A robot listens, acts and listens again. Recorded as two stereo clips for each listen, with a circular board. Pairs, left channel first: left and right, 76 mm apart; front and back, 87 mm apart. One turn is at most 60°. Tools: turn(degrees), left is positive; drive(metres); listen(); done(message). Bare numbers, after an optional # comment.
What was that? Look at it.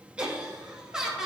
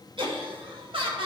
# The laughter: 175° right.
turn(-60)
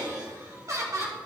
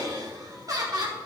# The laughter is now 140° right.
turn(-60)
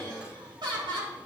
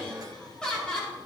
# The laughter is now 85° right.
turn(-60)
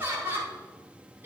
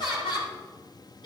# The laughter is now 30° right.
turn(-30)
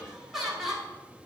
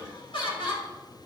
done("Facing the laughter, over 4 m away.")